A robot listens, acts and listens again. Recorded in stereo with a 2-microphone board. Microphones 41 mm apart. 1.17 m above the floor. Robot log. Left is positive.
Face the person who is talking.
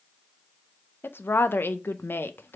note: The woman speaking: about 70° left or 110° left.
cmd yaw +70
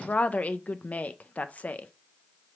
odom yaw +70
note: So it is at 40° left.
cmd yaw +40
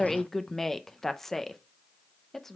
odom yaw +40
note: The woman speaking is now 10° left.
cmd yaw +10
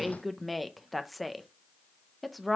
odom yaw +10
end: Found it: a woman speaking, straight ahead, under 1 m away.